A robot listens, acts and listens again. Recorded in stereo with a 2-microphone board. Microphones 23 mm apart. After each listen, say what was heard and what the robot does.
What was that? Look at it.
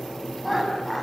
Turn 30° left.
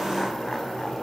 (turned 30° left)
Keep listening.
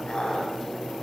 So it is at 145° left. Turn 145° left.
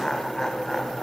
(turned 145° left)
The laughter is now 25° left. Turn 25° left.
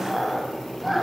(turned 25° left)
Facing the laughter, over 4 m away.